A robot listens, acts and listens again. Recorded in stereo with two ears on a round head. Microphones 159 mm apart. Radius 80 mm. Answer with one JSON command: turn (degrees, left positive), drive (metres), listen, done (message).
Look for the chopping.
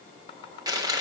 {"turn": 30}
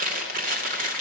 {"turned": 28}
{"listen": true}
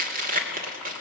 {"listen": true}
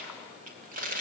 {"done": "I heard chopping, but can't make it out now. It was about straight ahead or 125° left."}